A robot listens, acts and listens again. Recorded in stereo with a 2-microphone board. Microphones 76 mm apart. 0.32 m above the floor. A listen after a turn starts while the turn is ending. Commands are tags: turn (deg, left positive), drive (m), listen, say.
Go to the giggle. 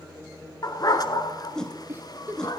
<turn deg="-25"/>
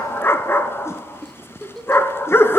<drive m="1.0"/>
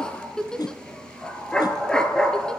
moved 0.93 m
<turn deg="10"/>
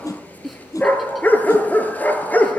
<drive m="1.0"/>
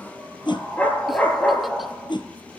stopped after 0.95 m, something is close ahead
<listen/>
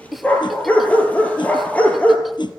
<say>Arrived at the giggle, straight ahead.</say>